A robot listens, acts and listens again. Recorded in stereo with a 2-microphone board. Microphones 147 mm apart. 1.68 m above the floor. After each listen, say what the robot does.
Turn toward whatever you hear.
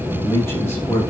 Turn 15° left.
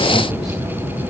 Keep listening.
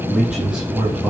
Turn 30° right.
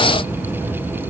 Keep listening.
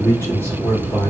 Turn 15° left.
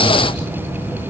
Keep listening.
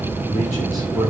Found it: a man speaking, straight ahead, over 4 m away.